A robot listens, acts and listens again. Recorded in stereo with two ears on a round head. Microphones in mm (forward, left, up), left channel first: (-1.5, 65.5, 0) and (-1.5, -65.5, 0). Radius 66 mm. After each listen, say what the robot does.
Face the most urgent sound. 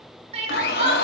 Turn 45° right.
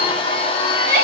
Turn 90° right.
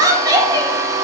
Turn 30° right.
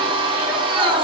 Keep listening.
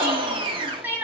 Turn 15° right.
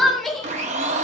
Found it: crying, straight ahead, 1 to 2 m away.